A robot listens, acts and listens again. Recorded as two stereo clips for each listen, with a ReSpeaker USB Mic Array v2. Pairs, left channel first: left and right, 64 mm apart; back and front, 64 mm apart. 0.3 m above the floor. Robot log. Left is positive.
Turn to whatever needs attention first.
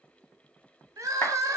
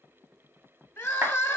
note: The crying: 125° right.
cmd yaw -125
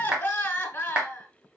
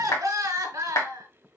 note: The crying is now 30° left.
cmd yaw +30
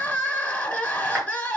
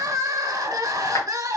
note: The crying is now 25° left.
cmd yaw +25
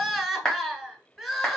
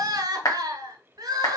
end: Found it: crying, straight ahead, under 1 m away.